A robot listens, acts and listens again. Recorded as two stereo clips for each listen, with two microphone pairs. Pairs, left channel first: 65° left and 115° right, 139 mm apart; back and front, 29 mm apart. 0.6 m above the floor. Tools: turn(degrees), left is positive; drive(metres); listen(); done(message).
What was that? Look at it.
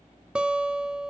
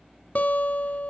turn(degrees=155)
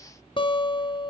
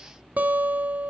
turn(degrees=15)
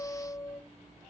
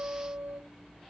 done("Found it: a guitar, straight ahead, under 1 m away.")